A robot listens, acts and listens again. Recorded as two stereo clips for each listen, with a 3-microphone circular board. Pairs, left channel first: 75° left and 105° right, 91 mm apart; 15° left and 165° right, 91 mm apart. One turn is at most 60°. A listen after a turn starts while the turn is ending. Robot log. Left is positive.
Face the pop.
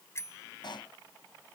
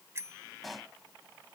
note: The pop: 105° left.
cmd yaw +60
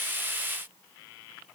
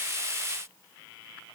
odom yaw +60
note: Nothing new. It was at 45° left.
cmd yaw +45
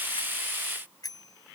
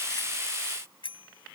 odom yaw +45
end: Facing where the pop came from. I can't hear it now.